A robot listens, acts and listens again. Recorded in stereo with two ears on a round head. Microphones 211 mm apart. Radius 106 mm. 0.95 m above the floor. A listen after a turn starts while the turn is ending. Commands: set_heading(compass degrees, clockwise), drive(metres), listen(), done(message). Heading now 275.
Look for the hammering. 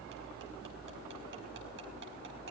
listen()
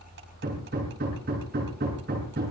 set_heading(320)
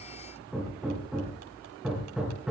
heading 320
done("Facing the hammering.")